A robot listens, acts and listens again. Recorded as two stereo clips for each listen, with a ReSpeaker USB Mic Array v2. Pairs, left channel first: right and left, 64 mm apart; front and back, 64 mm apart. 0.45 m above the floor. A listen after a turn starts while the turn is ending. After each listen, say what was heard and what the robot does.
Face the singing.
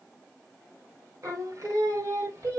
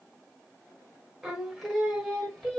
The singing: 80° left. Turn 80° left.
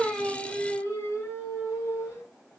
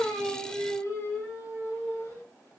The singing is now 50° right. Turn 50° right.
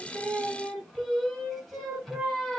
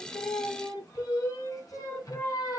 Facing the singing.